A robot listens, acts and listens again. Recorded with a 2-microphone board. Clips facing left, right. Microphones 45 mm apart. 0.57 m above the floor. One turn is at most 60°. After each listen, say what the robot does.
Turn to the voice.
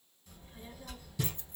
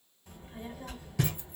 Turn 55° right.
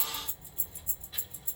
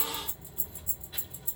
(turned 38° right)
Turn 15° right.
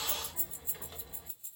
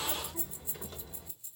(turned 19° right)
Found it: a child speaking, straight ahead, 2 to 4 m away.